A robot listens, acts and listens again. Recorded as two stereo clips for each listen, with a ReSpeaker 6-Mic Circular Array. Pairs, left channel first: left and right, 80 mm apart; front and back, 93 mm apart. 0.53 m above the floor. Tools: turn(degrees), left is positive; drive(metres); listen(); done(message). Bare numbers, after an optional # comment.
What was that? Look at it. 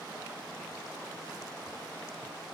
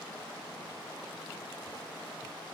listen()
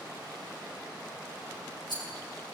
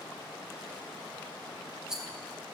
# The rattle: 95° left.
turn(95)
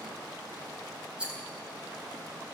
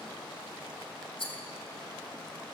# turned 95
# The rattle is now 15° right.
turn(-15)
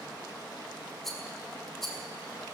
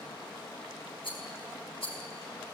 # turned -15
done("Facing the rattle, 2 to 4 m away.")